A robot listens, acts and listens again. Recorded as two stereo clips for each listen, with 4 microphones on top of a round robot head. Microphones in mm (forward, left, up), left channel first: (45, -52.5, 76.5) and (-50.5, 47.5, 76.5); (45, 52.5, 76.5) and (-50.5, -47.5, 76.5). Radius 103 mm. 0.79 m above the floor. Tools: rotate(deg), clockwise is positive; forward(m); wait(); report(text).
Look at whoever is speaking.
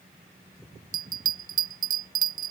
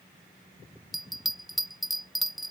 wait()
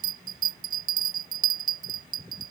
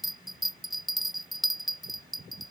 wait()
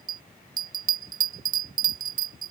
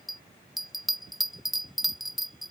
report("I can't make out anyone speaking to turn to.")